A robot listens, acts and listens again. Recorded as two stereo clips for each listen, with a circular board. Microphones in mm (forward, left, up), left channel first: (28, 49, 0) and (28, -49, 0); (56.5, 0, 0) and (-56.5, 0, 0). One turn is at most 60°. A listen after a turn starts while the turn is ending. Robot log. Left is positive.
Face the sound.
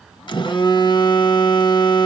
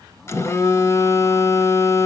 note: The phone buzzing: 60° left.
cmd yaw +60
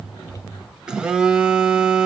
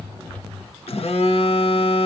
note: The phone buzzing is now 10° right.
cmd yaw -10
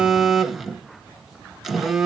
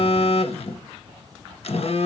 end: Found it: a phone buzzing, straight ahead.